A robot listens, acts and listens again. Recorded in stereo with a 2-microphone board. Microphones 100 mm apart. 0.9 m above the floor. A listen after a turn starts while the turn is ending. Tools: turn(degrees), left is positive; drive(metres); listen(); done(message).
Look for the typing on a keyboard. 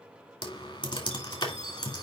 turn(degrees=45)
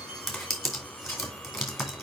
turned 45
done("Found it: typing on a keyboard, straight ahead.")